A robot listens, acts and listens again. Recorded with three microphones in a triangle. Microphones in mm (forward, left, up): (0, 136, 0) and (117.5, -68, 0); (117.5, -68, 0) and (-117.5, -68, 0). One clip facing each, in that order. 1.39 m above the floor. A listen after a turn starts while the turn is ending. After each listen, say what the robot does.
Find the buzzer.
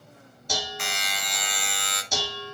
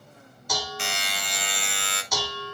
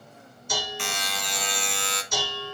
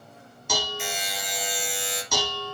Found it: a buzzer, straight ahead, 1 to 2 m away.